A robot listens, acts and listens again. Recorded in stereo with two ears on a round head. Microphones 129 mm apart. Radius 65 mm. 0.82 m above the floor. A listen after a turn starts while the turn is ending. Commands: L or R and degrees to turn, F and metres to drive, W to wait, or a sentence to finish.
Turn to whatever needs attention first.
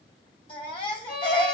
L35
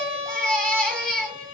Found it: a baby crying, straight ahead.